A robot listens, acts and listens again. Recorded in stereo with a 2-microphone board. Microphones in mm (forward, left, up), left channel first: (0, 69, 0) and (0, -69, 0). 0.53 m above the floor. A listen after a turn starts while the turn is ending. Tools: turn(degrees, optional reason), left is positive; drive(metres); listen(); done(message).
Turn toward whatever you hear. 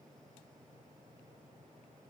listen()
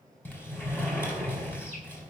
turn(degrees=15, reason="The sliding door: about 15° left or 165° left.")
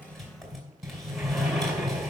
done("Facing the sliding door, 2 to 4 m away.")